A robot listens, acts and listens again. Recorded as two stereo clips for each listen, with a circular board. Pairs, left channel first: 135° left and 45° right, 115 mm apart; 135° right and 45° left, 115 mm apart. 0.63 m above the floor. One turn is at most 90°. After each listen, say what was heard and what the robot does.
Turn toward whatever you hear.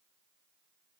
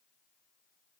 Keep listening.
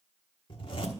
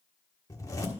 The zipper: 170° left. Turn 90° left.
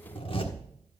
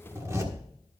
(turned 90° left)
The zipper is now 105° left. Turn 90° left.
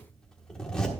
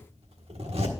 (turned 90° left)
The zipper is now 55° left. Turn 55° left.
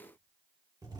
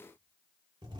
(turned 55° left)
Found it: a zipper, straight ahead, 1 to 2 m away.